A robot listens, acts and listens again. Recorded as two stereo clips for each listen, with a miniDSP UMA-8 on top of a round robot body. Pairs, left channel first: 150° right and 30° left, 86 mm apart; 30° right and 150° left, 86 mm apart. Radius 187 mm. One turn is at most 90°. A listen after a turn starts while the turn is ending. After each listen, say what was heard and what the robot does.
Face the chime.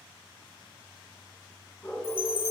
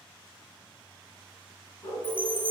The chime: 135° right. Turn 90° right.
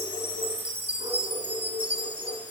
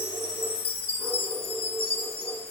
The chime is now 40° right. Turn 40° right.
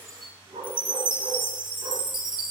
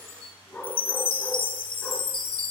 Facing the chime.